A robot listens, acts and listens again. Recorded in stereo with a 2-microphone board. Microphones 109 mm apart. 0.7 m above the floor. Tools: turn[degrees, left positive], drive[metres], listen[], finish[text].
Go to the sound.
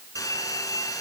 Thought: The hair dryer: about 30° left or 150° left.
Action: turn[30]
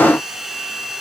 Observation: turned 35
Action: drive[1.0]
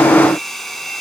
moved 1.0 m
Action: drive[1.0]
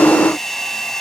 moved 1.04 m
Action: drive[1.0]
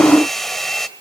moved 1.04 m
Action: drive[1.0]
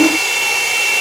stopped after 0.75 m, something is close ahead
Action: finish[Arrived at the hair dryer, straight ahead.]